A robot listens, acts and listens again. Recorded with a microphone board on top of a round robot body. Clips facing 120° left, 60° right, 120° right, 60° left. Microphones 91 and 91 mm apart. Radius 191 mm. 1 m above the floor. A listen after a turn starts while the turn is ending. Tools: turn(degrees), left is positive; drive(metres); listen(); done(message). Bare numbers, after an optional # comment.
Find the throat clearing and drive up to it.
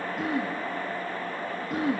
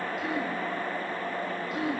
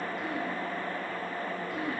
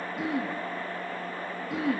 # The throat clearing: 70° left.
turn(70)
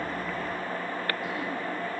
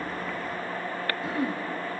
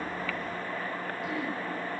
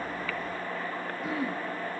drive(1.0)
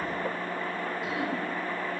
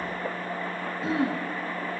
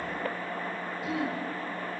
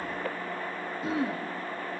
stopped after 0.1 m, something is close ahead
done("Something is in my way. I am facing the throat clearing but have not reached it.")